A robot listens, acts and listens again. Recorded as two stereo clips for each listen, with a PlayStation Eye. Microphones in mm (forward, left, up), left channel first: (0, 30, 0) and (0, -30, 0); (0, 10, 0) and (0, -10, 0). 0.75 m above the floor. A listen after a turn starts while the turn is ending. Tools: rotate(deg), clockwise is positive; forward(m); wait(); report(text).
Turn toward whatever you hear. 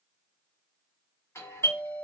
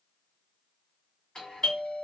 rotate(-45)
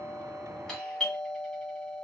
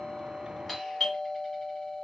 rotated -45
rotate(-10)
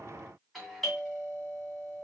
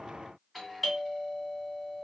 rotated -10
report("Facing the doorbell, 2 to 4 m away.")